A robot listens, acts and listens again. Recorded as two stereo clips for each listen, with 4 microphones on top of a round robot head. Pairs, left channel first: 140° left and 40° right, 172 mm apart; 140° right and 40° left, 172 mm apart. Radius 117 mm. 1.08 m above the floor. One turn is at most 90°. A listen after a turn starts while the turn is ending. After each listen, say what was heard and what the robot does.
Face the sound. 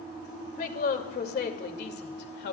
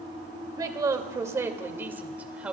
The woman speaking: 120° left. Turn 90° left.
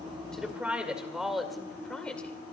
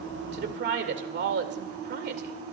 The woman speaking is now 60° left. Turn 60° left.
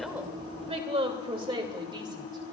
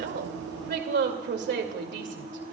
The woman speaking is now 25° left. Turn 25° left.
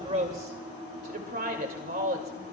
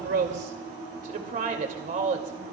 Found it: a woman speaking, straight ahead, 2 to 4 m away.